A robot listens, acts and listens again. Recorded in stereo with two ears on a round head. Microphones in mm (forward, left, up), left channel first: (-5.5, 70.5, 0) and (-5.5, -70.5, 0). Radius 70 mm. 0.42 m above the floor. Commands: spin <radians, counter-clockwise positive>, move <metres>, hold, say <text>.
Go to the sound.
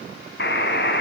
spin 1.31
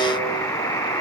spin 0.35
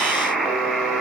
move 1.0
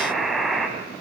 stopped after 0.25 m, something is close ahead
say Blocked. The buzzer is further on, straight ahead.